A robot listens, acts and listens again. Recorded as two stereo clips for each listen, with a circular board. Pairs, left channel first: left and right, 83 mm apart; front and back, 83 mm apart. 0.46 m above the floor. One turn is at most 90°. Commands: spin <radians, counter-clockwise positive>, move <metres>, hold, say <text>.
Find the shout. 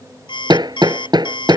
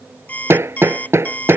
hold
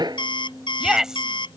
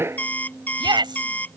spin -1.57
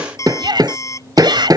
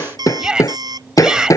spin -1.57
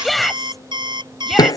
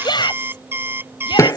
say Facing the shout.